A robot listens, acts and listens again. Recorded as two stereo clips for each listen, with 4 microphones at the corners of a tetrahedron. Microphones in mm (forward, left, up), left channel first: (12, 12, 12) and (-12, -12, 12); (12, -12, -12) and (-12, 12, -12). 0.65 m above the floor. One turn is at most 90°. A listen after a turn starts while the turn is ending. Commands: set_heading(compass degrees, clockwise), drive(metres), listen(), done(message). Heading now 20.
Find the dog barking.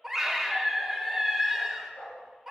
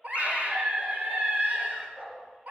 set_heading(290)
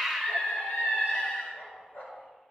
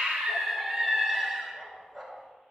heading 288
set_heading(253)
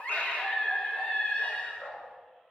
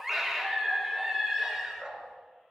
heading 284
set_heading(219)
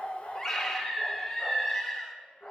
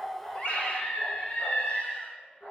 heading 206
done("Facing the dog barking.")